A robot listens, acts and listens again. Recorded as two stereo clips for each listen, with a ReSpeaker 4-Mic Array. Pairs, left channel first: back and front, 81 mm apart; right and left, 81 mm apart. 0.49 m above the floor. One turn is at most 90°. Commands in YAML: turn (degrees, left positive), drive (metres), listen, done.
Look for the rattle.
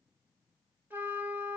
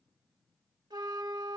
listen: true
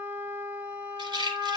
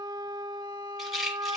done: "Found it: a rattle, straight ahead."